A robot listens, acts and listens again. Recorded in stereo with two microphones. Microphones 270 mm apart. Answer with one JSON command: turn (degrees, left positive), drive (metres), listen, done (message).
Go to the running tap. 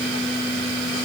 {"listen": true}
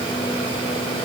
{"listen": true}
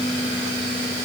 {"done": "I can't make out a running tap to turn to."}